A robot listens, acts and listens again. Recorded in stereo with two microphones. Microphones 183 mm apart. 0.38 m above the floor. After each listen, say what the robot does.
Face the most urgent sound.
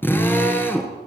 Keep listening.
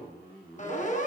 Turn 45° left.
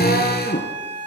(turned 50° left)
Turn 85° left.
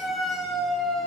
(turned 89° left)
Found it: a siren, straight ahead.